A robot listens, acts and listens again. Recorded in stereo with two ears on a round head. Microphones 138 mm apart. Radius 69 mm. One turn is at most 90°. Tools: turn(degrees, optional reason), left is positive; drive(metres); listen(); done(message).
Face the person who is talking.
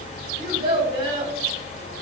turn(degrees=-35, reason="The child speaking: about 35° right or 145° right.")
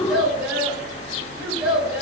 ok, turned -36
done("Facing the child speaking, 1 to 2 m away.")